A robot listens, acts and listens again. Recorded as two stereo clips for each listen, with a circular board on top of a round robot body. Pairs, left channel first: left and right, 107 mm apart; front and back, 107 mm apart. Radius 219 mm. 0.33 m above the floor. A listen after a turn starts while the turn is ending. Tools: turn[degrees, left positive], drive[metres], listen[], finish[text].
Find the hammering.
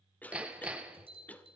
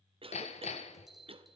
Thought: The hammering: 10° right.
Action: turn[-10]
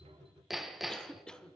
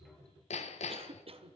Action: finish[Found it: hammering, straight ahead, under 1 m away.]